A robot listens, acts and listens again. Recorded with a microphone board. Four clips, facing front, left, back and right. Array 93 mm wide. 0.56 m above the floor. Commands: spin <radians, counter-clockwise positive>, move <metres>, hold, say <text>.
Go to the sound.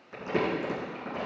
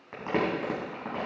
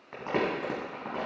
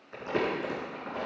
spin 2.27
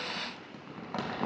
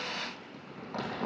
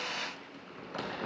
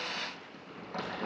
move 1.0
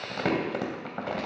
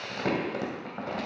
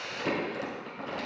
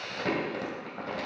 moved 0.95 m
move 1.0
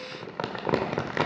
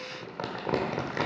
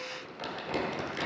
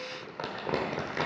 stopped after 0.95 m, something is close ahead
say I am next to the crumpling.